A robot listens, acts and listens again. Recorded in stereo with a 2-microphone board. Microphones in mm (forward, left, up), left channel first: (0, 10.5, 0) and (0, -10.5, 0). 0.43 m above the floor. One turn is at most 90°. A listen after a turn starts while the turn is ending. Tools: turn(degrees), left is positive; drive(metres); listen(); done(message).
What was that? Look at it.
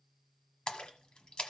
turn(degrees=50)
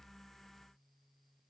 listen()
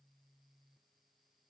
done("I heard a splash, but can't make it out now. It was about straight ahead or 80° left.")